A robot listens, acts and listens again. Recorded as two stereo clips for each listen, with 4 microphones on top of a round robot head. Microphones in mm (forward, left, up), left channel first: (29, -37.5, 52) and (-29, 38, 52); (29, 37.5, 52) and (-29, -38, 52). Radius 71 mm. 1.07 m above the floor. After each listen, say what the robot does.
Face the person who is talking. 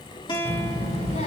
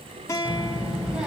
Turn 45° right.
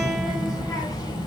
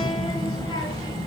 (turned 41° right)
Found it: a child speaking, straight ahead.